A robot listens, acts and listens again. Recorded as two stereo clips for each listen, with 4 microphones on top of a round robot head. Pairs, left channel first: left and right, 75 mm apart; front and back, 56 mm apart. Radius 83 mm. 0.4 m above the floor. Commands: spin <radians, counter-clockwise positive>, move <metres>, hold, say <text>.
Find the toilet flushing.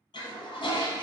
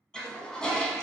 spin 1.31
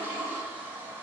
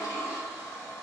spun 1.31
spin -0.44
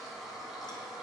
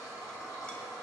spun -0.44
say Facing the toilet flushing.